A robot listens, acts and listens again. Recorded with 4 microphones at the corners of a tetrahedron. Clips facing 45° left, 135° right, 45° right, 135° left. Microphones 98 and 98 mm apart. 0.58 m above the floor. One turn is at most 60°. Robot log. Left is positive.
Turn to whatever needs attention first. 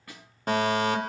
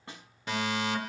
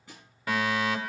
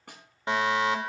note: The fire alarm: 75° left.
cmd yaw +60
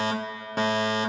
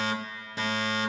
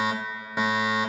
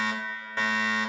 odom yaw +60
note: The fire alarm is now 25° left.
cmd yaw +25
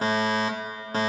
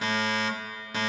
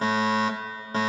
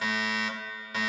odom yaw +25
end: Found it: a fire alarm, straight ahead.